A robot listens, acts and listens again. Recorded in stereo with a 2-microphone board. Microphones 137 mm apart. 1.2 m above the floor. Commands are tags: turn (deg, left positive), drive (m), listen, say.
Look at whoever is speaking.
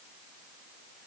<listen/>
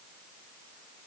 <listen/>
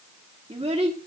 <turn deg="-45"/>
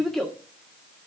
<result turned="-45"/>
<say>Found it: a child speaking, straight ahead, 1 to 2 m away.</say>